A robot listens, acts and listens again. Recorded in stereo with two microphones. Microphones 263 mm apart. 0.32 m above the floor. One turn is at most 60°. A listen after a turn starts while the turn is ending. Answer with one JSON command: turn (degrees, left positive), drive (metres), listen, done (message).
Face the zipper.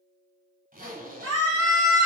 {"turn": -35}
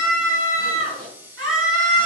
{"listen": true}
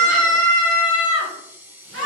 {"listen": true}
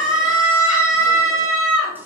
{"done": "I heard a zipper, but can't make it out now. It was about straight ahead or 110° right."}